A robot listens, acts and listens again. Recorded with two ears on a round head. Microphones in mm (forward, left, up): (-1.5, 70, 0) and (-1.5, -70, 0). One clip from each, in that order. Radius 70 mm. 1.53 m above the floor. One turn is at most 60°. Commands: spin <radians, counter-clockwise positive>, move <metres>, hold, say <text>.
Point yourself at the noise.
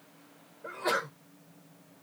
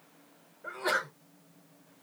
spin -0.52
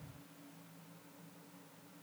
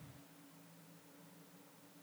hold
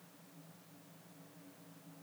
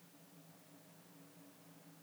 say I heard a sneeze, but can't make it out now. It was about 25° left or 145° right.